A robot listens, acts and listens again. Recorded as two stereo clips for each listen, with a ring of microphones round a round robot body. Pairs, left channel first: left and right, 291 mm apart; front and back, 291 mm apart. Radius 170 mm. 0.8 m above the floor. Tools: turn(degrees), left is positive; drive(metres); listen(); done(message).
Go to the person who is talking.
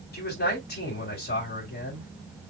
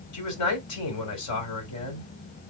turn(degrees=30)
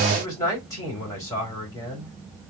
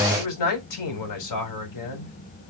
turn(degrees=10)
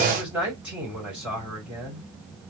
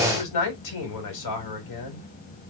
drive(metres=1.0)
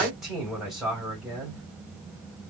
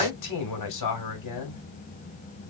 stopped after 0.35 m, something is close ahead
done("Blocked. The man speaking is further on, straight ahead.")